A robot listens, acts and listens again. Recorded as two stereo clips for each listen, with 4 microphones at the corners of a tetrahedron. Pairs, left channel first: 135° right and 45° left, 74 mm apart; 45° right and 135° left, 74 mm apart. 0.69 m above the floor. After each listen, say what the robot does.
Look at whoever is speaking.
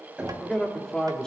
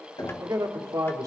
Turn 145° left.
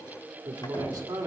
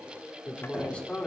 Turn 30° left.
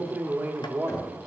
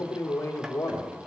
Turn 10° right.
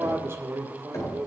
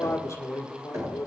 Facing the man speaking.